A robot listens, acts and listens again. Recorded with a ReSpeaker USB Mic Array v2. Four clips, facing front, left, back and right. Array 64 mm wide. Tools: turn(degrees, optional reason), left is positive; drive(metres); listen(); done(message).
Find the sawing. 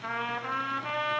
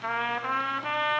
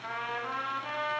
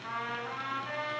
listen()
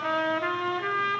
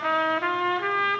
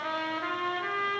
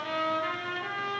listen()
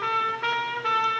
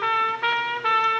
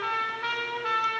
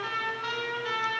done("I can't make out sawing, only a trumpet.")